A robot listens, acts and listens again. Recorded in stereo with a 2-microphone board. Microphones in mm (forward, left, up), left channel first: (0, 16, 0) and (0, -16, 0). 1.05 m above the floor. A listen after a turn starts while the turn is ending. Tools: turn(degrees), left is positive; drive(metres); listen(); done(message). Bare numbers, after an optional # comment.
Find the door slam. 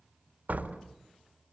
# The door slam: about 70° right or 110° right.
turn(-70)
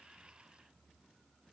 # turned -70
listen()
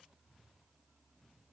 done("I heard a door slam, but can't make it out now. It was about straight ahead or 40° right.")